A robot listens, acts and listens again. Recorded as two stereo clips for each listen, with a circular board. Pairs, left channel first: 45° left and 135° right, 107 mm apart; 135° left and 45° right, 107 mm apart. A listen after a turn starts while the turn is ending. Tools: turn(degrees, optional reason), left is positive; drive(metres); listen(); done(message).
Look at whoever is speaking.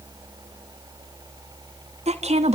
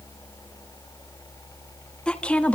turn(degrees=-150, reason="The woman speaking: 150° right.")
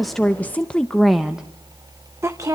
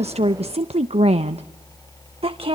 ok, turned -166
turn(degrees=-75, reason="The woman speaking is now 75° right.")
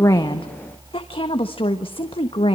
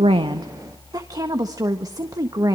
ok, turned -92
turn(degrees=10, reason="The woman speaking is now 10° left.")
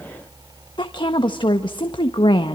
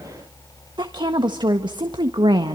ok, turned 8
done("Facing the woman speaking, 1 to 2 m away.")